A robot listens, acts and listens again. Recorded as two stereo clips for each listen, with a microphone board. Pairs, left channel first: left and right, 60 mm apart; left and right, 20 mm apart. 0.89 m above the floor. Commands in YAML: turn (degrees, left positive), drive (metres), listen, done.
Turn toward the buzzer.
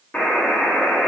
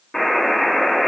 turn: 20
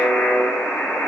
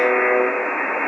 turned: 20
turn: 140
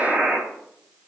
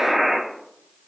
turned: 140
turn: -20
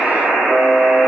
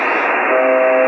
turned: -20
done: "Found it: a buzzer, straight ahead."